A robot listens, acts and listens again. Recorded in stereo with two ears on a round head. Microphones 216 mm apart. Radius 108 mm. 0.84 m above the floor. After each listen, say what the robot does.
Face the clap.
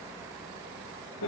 Keep listening.
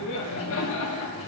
Keep listening.
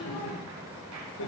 I can't make out a clap, only laughter.